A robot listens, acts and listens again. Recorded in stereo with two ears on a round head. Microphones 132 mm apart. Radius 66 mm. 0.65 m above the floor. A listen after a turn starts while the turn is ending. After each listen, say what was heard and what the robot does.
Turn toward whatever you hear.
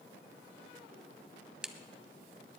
Turn 30° right.
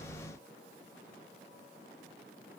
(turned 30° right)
Keep listening.
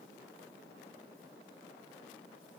I heard a crack, but can't make it out now. It was about 25° left or 145° right.